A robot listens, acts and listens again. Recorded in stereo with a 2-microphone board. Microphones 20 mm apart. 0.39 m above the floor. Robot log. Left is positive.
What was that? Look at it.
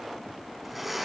cmd yaw -30
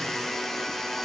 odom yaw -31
note: So it is at 25° left.
cmd yaw +25
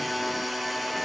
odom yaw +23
end: Facing the blender, over 4 m away.